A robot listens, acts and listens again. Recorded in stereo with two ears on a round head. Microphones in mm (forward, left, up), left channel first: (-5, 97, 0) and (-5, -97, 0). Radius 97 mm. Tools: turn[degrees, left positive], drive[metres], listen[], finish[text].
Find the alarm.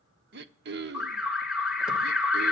Action: turn[-30]
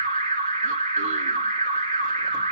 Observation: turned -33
Thought: So it is at 140° right.
Action: turn[-140]
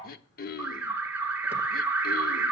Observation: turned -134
Thought: The alarm is now 10° right.
Action: turn[-10]
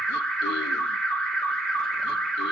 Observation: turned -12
Action: finish[Found it: an alarm, straight ahead.]